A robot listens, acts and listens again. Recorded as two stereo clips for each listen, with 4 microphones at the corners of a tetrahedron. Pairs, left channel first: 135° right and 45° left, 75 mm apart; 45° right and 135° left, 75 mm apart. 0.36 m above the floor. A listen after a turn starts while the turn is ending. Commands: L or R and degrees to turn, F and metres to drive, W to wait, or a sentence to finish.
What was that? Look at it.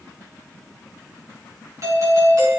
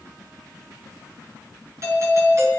L90
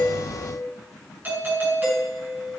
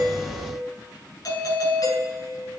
R15
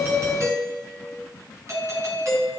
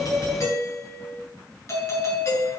Facing the doorbell, over 4 m away.